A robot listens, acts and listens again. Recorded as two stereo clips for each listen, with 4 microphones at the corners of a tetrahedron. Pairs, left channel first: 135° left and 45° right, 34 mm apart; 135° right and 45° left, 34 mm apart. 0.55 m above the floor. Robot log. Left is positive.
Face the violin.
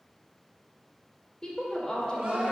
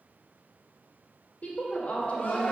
cmd idle
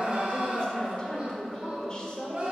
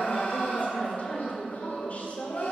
cmd idle
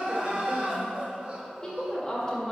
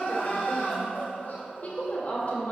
end: I can't make out a violin to turn to.